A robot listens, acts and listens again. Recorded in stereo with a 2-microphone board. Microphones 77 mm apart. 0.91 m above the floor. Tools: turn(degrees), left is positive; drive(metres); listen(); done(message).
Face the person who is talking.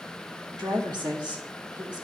turn(degrees=-75)
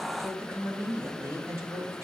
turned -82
turn(degrees=-40)
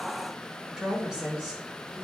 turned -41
turn(degrees=-10)
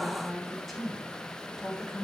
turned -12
done("Found it: a woman speaking, straight ahead.")